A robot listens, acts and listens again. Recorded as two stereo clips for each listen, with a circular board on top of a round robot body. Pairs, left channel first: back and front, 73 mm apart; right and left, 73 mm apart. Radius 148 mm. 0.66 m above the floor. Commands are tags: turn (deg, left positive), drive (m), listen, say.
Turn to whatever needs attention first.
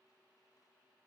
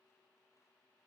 <listen/>
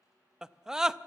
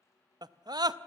<turn deg="80"/>
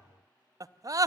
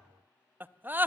<turn deg="30"/>
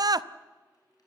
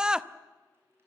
<turn deg="10"/>
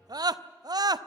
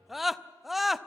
<say>Found it: a scream, straight ahead.</say>